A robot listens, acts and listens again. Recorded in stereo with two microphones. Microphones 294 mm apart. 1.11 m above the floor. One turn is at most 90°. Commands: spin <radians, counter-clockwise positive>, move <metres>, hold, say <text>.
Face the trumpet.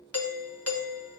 hold
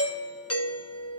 hold
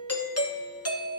say I can't make out a trumpet, only a doorbell.